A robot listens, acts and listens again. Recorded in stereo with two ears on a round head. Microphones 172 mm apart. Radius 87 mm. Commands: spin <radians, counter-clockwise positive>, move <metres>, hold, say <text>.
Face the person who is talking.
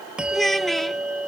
spin 0.52
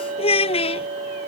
spin 2.53
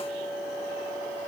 hold
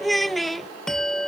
say Found it: a child speaking, straight ahead.